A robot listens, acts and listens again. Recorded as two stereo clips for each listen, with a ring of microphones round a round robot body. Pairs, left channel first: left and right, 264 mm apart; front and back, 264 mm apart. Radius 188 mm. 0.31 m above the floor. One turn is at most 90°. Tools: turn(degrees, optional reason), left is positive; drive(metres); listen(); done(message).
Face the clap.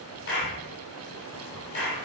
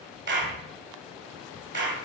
turn(degrees=90, reason="The clap: 140° left.")
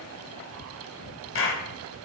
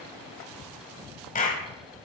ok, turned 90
turn(degrees=55, reason="The clap is now 55° left.")
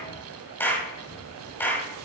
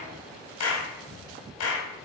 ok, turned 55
turn(degrees=10, reason="The clap is now 10° left.")
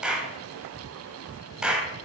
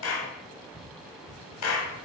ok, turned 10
done("Facing the clap, 1 to 2 m away.")